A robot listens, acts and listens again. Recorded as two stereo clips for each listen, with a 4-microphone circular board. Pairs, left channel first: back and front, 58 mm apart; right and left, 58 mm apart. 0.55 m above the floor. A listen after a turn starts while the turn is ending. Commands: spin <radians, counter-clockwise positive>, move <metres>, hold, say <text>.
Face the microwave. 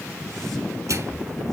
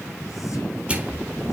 spin 0.44
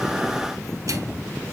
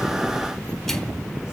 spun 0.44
hold
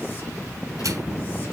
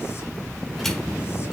hold
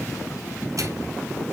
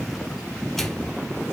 say I heard a microwave from this way, but can't make it out now.